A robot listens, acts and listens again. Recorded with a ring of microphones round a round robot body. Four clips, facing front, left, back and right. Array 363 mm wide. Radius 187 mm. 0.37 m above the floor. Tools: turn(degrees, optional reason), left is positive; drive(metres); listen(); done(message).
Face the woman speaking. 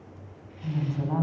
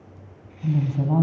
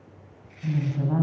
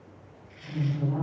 turn(degrees=115, reason="The woman speaking: 115° left.")
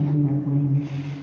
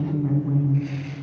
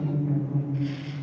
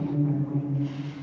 turn(degrees=30, reason="The woman speaking is now 30° left.")
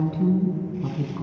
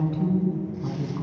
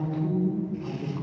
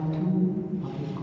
done("Facing the woman speaking, over 4 m away.")